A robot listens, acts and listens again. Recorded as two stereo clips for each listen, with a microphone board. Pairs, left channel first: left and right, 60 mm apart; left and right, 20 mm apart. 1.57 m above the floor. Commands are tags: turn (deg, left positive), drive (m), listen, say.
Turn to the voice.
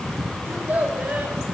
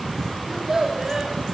<turn deg="-30"/>
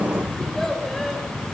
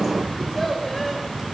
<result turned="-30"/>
<listen/>
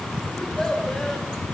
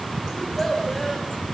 <turn deg="10"/>
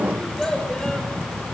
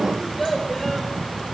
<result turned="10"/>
<turn deg="10"/>
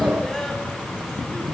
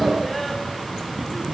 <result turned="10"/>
<listen/>
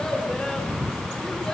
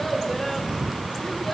<listen/>
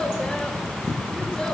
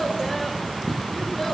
<say>Facing where the child speaking came from. I can't hear it now.</say>